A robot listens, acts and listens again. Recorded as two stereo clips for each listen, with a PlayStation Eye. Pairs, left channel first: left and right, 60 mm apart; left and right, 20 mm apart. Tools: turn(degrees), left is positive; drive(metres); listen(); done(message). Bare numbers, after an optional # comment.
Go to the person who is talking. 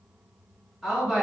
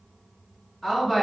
turn(-30)
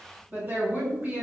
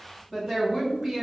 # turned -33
# So it is at 140° right.
turn(-140)
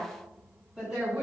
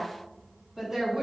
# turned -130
# The woman speaking is now 10° right.
turn(-10)
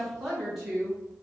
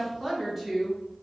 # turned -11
drive(1.0)
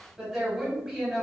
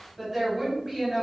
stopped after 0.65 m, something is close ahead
done("I am next to the woman speaking.")